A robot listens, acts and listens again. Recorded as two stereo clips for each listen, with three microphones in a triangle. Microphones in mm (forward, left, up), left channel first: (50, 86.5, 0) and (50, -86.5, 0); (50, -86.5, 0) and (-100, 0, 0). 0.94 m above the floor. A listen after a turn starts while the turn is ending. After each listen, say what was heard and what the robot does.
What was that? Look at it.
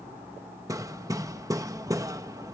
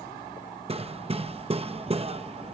The hammering: 160° right. Turn 160° right.
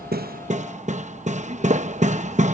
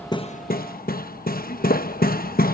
The hammering is now 50° right. Turn 50° right.
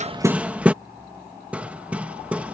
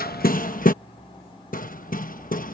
The hammering is now 10° right. Turn 10° right.
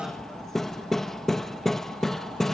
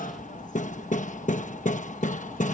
Found it: hammering, straight ahead.